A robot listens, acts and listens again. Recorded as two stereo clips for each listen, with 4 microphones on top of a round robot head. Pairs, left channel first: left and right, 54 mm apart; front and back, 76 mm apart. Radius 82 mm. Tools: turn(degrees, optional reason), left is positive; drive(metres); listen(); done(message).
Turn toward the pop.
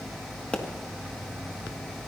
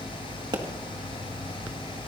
turn(degrees=155, reason="The pop: 155° left.")
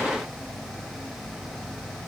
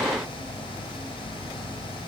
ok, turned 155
done("Facing where the pop came from. I can't hear it now.")